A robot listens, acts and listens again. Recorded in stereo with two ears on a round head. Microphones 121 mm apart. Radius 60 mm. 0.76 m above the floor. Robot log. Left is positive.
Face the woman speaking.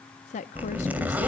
note: The woman speaking: about 55° left or 125° left.
cmd yaw +55
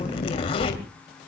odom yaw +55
cmd idle
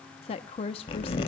note: So it is at 50° left.
cmd yaw +50
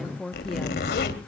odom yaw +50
end: Facing the woman speaking.